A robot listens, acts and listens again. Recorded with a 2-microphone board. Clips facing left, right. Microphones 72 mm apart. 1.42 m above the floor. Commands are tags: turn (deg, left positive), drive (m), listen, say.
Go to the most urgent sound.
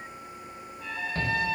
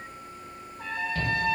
<turn deg="40"/>
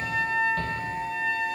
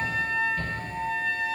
<turn deg="100"/>
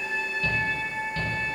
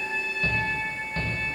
<turn deg="-35"/>
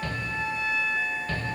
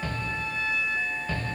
<turn deg="-10"/>
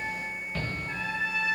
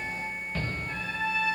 <drive m="1.0"/>
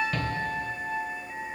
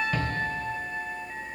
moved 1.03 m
<turn deg="-10"/>
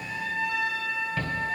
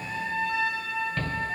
<drive m="1.0"/>
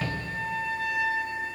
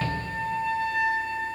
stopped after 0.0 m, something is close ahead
<say>Arrived at the shout, straight ahead.</say>